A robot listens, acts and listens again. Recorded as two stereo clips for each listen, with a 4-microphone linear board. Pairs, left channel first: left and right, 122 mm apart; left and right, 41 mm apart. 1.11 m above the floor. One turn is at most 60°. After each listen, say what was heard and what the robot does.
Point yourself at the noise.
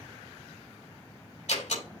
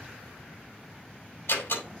The door slam: about 70° left or 110° left. Turn 60° left.
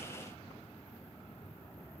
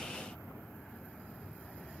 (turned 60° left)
Keep listening.
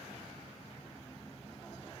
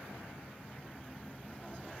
I heard a door slam, but can't make it out now. It was about 10° left or 50° left.